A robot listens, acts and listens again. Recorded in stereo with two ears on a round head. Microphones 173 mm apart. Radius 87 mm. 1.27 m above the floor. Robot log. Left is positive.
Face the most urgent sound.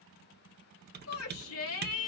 note: The shout: about 75° left or 105° left.
cmd yaw +75
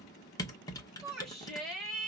end: Found it: a shout, straight ahead.